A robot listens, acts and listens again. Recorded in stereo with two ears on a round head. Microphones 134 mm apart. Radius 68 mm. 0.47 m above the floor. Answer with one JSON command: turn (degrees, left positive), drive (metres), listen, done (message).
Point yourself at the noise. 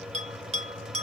{"turn": -45}
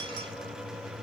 {"listen": true}
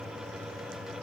{"listen": true}
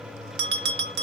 {"turn": -95}
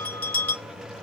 {"turn": 10}
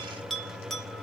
{"done": "Facing the bell, 1 to 2 m away."}